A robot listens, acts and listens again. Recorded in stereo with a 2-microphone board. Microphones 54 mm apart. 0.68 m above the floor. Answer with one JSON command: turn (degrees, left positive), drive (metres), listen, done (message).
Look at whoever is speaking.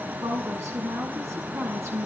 {"turn": -60}
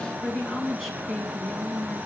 {"done": "Facing the woman speaking, over 4 m away."}